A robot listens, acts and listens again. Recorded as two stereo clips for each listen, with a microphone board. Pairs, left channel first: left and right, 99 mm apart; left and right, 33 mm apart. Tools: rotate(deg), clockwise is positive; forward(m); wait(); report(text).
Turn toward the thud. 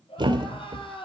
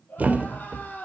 rotate(50)
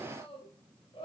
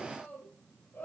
wait()
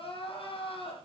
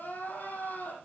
report("I heard a thud, but can't make it out now. It was about straight ahead or 80° right.")